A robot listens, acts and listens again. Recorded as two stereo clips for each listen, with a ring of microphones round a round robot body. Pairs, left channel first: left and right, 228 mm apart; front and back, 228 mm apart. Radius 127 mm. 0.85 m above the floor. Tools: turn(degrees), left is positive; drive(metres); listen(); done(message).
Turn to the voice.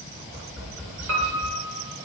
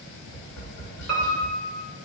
listen()
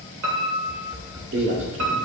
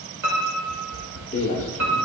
turn(degrees=-60)
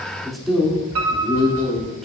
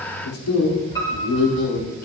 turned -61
done("Found it: a man speaking, straight ahead, 2 to 4 m away.")